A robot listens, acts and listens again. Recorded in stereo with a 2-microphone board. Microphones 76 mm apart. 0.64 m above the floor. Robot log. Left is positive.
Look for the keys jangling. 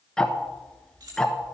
note: The keys jangling: about 65° right or 115° right.
cmd yaw -65
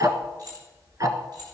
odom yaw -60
note: So it is at 60° right.
cmd yaw -60
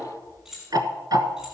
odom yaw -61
end: Found it: keys jangling, straight ahead.